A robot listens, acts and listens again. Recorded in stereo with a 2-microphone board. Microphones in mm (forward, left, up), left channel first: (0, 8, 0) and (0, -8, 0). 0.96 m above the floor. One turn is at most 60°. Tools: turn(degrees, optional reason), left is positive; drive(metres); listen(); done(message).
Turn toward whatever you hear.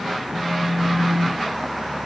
turn(degrees=20, reason="The phone buzzing: about 20° left or 160° left.")
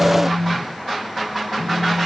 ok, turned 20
done("Facing the phone buzzing.")